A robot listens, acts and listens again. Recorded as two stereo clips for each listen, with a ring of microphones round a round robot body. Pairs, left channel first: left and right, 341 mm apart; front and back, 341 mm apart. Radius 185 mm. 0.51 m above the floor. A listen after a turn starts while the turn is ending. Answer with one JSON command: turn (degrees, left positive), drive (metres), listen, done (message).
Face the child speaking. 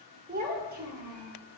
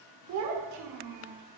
{"turn": -150}
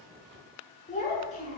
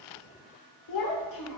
{"turn": 20}
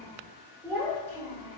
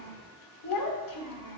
{"done": "Found it: a child speaking, straight ahead, under 1 m away."}